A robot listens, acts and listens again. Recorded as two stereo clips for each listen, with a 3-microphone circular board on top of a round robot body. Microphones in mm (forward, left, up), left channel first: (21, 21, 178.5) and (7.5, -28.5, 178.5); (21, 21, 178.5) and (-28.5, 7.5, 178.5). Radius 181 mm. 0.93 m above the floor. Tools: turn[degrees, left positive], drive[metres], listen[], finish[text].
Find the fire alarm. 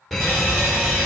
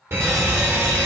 Thought: The fire alarm: 165° left.
Action: turn[165]
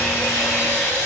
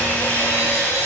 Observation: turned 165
Action: listen[]
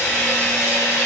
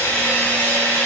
Action: listen[]
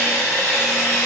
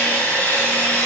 Action: finish[I heard a fire alarm from this way, but can't make it out now.]